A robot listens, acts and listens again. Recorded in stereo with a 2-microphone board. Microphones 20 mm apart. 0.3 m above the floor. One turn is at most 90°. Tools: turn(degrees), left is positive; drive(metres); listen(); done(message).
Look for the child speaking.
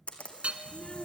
turn(degrees=35)
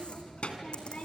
turn(degrees=90)
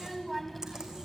done("Facing the child speaking, 1 to 2 m away.")